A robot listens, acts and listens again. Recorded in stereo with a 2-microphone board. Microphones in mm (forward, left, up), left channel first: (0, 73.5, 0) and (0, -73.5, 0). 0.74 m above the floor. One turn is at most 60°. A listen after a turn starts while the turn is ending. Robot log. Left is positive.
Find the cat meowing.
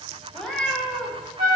cmd yaw +30
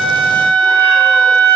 cmd idle
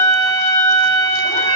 cmd idle
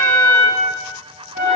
end: I heard a cat meowing, but can't make it out now. It was about 25° right or 145° left.